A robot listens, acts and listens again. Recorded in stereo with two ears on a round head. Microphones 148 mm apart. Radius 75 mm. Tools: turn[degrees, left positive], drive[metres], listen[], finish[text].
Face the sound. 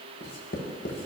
Thought: The writing: about 65° left or 115° left.
Action: turn[65]
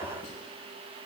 Thought: So it is at 50° left.
Action: turn[50]
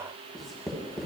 Action: finish[Facing the writing, under 1 m away.]